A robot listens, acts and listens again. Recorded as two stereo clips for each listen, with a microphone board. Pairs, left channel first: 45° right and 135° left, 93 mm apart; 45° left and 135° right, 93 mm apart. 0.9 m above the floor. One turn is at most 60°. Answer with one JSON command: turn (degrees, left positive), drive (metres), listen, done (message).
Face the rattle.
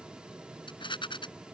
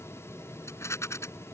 {"turn": -15}
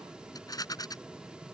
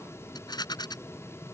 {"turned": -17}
{"done": "Found it: a rattle, straight ahead."}